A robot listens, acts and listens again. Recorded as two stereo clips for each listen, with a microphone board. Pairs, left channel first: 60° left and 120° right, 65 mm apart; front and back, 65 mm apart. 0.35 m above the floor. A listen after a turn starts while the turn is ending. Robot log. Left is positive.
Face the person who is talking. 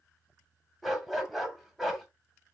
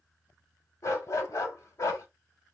cmd idle
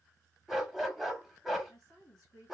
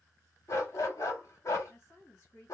note: The woman speaking: 55° left.
cmd yaw +55
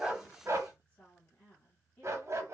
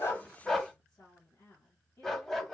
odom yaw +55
end: Found it: a woman speaking, straight ahead, 2 to 4 m away.